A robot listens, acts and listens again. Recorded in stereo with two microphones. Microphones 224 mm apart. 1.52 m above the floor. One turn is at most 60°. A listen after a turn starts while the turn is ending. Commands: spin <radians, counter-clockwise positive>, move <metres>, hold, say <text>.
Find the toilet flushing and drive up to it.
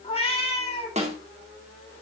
hold
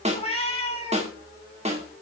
hold
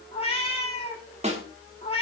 say I can't make out a toilet flushing, only a cat meowing and a snare drum.